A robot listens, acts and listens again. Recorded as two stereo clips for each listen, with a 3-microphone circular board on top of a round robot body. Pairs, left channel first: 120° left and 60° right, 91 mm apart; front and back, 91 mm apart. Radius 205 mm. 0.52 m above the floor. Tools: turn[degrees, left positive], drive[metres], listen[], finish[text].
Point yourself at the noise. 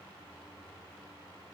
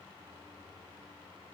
Action: listen[]
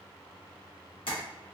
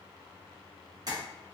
Thought: The tapping: 135° left.
Action: turn[135]
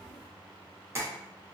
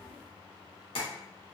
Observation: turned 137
Action: finish[Found it: tapping, straight ahead, 1 to 2 m away.]